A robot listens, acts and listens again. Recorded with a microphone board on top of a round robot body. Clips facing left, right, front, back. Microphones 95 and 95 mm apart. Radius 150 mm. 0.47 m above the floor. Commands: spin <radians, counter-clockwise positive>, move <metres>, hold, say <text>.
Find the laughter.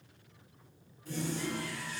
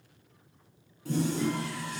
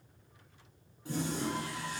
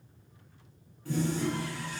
hold
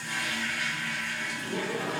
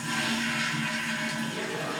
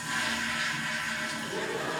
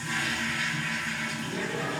spin 1.05
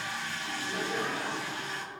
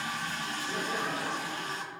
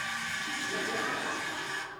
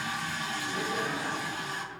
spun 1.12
say Found it: laughter, straight ahead, over 4 m away.